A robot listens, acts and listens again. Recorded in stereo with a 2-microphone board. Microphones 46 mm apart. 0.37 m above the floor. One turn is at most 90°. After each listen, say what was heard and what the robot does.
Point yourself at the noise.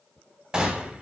The gunshot: about 20° right or 160° right. Turn 20° right.
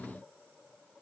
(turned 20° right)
Keep listening.
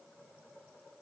I heard a gunshot, but can't make it out now. It was about straight ahead or 140° right.